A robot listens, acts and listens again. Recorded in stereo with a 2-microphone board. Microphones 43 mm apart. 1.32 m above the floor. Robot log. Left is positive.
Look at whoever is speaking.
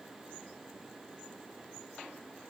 cmd idle
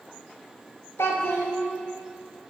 note: The child speaking: about 75° left or 105° left.
cmd yaw +75
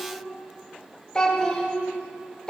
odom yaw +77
note: So it is at 20° left.
cmd yaw +20
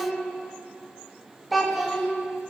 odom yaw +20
end: Found it: a child speaking, straight ahead.